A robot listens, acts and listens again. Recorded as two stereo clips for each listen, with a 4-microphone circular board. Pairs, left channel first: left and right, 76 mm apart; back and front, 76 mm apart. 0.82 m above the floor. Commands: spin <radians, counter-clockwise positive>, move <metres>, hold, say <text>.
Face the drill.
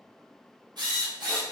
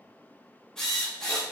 spin -1.75
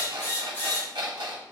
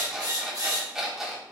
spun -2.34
spin 0.61
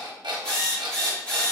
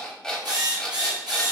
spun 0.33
spin 0.26
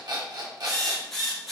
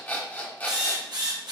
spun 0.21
say Found it: a drill, straight ahead.